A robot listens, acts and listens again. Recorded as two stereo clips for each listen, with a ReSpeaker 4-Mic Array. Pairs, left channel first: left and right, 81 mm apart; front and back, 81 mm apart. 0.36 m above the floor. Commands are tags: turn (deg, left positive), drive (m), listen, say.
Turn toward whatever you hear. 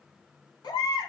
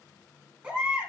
<turn deg="105"/>
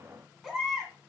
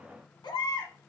<say>Facing the baby crying.</say>